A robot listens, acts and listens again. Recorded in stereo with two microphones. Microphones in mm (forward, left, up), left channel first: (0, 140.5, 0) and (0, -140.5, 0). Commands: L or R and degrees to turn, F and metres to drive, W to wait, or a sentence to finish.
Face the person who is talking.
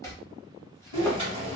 R50
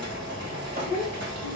R70
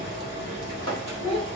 R20
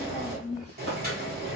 Found it: a child speaking, straight ahead, 1 to 2 m away.